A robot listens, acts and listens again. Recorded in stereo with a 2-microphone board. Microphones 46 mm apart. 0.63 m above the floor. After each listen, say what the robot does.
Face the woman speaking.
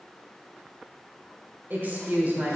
Turn 35° right.
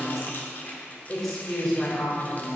Turn 10° left.
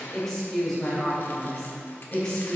Turn 10° left.
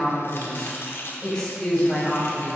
Facing the woman speaking, 2 to 4 m away.